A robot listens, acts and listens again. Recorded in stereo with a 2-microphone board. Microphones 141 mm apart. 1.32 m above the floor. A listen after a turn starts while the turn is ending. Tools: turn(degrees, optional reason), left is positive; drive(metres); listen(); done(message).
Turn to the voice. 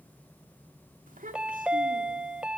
turn(degrees=-70, reason="The child speaking: about 70° right or 110° right.")
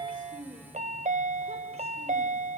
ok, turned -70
listen()
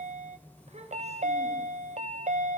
turn(degrees=-50, reason="So it is at 50° right.")
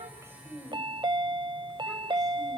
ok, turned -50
done("Found it: a child speaking, straight ahead, over 4 m away.")